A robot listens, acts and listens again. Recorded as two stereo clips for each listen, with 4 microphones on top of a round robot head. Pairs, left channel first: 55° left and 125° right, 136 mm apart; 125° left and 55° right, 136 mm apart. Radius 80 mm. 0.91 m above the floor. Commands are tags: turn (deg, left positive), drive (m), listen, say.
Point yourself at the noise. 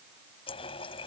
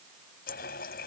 <turn deg="105"/>
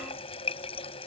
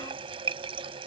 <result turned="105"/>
<say>Facing the running tap.</say>